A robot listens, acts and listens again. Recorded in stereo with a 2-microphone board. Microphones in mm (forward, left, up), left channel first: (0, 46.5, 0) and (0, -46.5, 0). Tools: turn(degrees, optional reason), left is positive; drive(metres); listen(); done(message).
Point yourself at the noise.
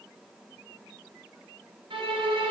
turn(degrees=-70, reason="The violin: about 70° right or 110° right.")
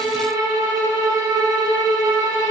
turn(degrees=-40, reason="So it is at 40° right.")
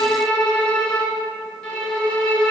turn(degrees=10, reason="The violin is now 10° left.")
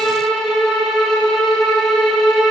done("Found it: a violin, straight ahead, 2 to 4 m away.")